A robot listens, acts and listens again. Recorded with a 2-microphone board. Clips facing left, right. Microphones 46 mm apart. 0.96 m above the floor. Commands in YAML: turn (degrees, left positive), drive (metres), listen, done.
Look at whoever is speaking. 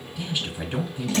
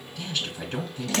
turn: 30
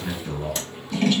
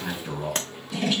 turn: -15
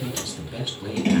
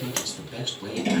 done: "Facing the man speaking, 2 to 4 m away."